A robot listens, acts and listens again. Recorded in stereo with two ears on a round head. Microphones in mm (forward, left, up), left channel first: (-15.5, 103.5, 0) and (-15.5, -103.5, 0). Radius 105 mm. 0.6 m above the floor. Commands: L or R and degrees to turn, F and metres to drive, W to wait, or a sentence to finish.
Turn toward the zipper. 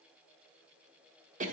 W
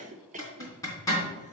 L30
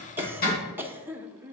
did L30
L135
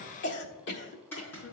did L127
L10
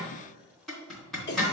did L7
Facing the zipper.